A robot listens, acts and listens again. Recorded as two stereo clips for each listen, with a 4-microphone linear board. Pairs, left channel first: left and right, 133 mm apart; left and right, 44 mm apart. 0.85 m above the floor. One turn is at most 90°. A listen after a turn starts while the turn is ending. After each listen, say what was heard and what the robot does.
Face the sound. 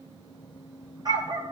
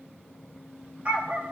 The dog barking: about 30° right or 150° right. Turn 30° right.
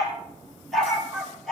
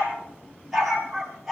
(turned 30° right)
Facing the dog barking, over 4 m away.